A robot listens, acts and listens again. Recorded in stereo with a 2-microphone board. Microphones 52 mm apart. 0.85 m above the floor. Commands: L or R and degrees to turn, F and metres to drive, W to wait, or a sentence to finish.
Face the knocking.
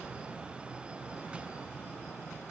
W
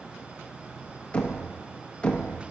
L25
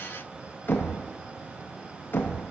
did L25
L130
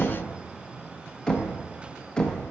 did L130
L15
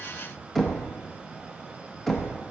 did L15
Facing the knocking, under 1 m away.